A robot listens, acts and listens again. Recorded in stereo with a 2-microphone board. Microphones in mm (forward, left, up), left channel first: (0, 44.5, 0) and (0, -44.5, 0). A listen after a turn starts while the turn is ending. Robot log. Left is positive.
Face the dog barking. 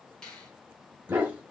note: The dog barking: about 15° right or 165° right.
cmd yaw -15
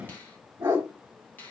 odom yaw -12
note: The dog barking: about 25° right or 155° right.
cmd yaw -25
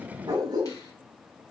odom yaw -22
note: So it is at 135° right.
cmd yaw -135
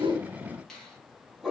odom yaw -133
end: Found it: a dog barking, straight ahead.